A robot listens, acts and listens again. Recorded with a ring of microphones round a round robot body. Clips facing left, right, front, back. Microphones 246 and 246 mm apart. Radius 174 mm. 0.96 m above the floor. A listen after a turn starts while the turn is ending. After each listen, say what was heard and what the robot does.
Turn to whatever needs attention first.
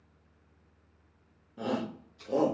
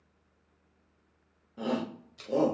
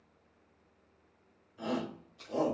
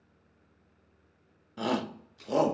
The shout: straight behind. Turn 180° left.
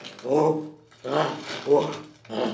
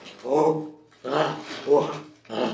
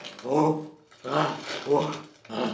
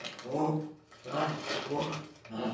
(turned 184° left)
Found it: a shout, straight ahead.